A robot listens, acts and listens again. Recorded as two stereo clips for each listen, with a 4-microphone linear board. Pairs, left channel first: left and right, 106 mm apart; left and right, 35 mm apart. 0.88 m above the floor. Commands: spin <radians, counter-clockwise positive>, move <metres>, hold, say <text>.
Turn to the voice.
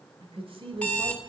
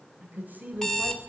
spin -1.13
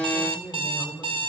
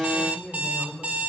spin 0.26
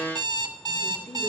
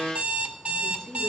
spin 0.26
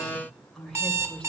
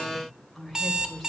say Found it: a woman speaking, straight ahead, 2 to 4 m away.